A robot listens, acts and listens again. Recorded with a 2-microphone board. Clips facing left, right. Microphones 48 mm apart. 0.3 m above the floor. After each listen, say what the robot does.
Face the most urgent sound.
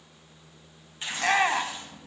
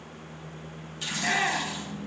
Turn 45° left.
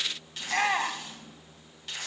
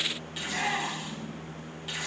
Turn 85° left.
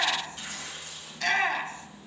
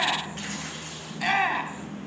Turn 10° right.
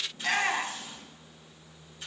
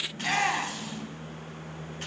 Facing the shout.